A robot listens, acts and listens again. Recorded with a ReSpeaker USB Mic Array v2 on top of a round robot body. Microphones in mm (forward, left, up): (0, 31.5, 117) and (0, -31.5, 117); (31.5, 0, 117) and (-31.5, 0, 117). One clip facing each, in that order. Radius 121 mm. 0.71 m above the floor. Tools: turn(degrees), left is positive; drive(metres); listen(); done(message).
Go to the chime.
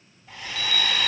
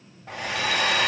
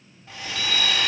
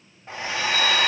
turn(degrees=-10)
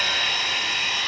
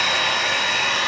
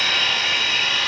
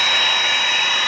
listen()
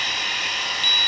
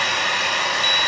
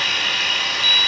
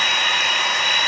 drive(metres=1.0)
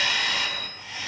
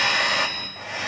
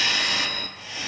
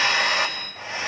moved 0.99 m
drive(metres=1.0)
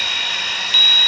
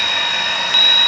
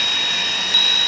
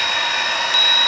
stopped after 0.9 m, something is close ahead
done("I am next to the chime.")